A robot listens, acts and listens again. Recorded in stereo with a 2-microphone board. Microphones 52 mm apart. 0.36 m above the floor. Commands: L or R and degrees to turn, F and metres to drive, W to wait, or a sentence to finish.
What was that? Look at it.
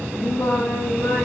L65
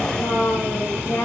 L60
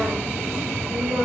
R15
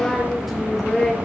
Facing the singing, 2 to 4 m away.